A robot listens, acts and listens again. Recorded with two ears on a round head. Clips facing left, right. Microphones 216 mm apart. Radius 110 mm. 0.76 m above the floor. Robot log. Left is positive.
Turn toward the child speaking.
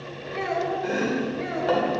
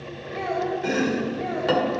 note: The child speaking: about 30° left or 150° left.
cmd yaw +30
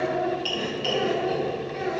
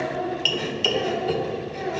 note: So it is at 10° left.
cmd yaw +10
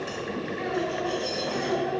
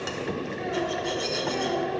end: Facing the child speaking, over 4 m away.